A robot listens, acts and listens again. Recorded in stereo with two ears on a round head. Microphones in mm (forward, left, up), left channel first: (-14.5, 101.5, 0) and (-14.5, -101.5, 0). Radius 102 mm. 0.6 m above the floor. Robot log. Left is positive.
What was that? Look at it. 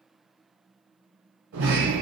note: The sliding door: about 55° right or 125° right.
cmd yaw -55
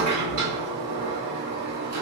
note: So it is at 70° right.
cmd yaw -70
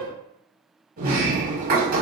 note: The sliding door is now 40° right.
cmd yaw -40
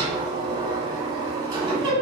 note: The sliding door is now 15° right.
cmd yaw -15
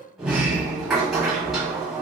end: Found it: a sliding door, straight ahead.